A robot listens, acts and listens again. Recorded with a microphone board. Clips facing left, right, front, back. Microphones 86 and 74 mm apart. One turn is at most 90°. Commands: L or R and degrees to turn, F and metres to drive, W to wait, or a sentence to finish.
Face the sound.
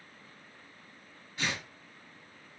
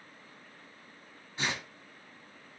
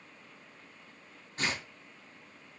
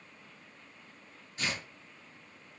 R30
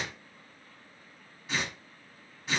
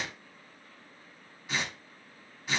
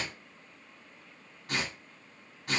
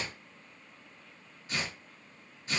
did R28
Facing the tearing paper.